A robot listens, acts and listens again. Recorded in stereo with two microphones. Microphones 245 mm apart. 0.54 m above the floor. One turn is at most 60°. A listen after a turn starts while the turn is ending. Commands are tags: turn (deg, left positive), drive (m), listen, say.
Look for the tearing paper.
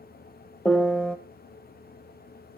<listen/>
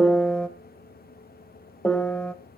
<listen/>
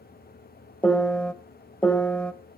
<say>I can't make out tearing paper, only a piano.</say>